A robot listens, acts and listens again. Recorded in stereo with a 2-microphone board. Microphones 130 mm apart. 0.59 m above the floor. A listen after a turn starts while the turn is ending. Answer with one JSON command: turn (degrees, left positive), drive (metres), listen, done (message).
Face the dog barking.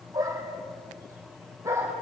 {"turn": -20}
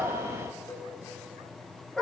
{"done": "Found it: a dog barking, straight ahead."}